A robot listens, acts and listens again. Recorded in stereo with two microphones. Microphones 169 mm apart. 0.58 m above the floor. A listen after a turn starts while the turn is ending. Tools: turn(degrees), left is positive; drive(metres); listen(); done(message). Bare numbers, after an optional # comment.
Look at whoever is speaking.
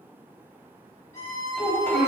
# The child speaking: about 65° left or 115° left.
turn(65)
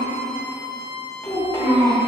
# So it is at 15° left.
turn(15)
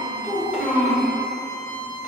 done("Facing the child speaking.")